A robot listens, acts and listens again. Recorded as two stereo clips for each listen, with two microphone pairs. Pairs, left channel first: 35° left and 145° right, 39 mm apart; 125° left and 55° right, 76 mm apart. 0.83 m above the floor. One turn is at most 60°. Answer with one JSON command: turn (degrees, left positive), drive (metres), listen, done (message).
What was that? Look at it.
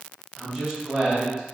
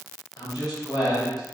{"turn": 60}
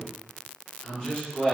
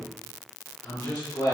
{"turn": 60}
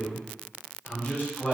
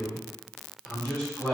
{"turn": 40}
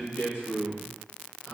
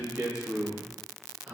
{"turn": 10}
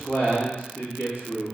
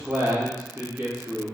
{"done": "Found it: a man speaking, straight ahead, 2 to 4 m away."}